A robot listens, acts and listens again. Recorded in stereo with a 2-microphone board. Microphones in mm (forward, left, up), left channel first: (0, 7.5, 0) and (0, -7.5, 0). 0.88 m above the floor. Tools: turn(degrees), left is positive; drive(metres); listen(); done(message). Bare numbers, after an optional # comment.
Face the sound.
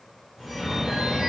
# The phone ringing: about 50° right or 130° right.
turn(-50)
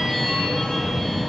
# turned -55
# So it is at 70° right.
turn(-70)
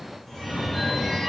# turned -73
done("Facing the phone ringing, 2 to 4 m away.")